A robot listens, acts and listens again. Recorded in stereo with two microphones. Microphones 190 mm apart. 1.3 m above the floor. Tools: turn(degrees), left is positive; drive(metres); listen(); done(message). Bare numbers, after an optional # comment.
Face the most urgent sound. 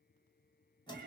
listen()
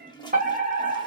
# The fire alarm: about 45° right or 135° right.
turn(-45)
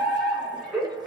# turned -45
done("Found it: a fire alarm, straight ahead, 1 to 2 m away.")